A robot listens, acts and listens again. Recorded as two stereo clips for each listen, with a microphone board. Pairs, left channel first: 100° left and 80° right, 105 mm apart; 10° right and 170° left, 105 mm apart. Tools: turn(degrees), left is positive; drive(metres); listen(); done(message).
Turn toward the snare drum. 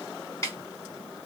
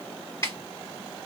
turn(degrees=45)
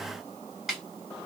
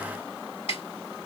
turn(degrees=10)
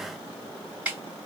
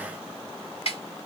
done("Found it: a snare drum, straight ahead, 2 to 4 m away.")